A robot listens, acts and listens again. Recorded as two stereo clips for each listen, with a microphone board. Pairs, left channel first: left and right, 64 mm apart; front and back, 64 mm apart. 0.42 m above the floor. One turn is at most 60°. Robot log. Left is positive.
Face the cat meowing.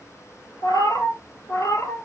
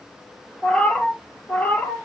note: The cat meowing: 60° left.
cmd yaw +60
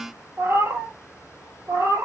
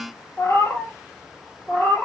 note: The cat meowing is now 55° right.
cmd yaw -55
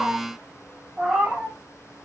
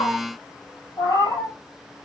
end: Found it: a cat meowing, straight ahead.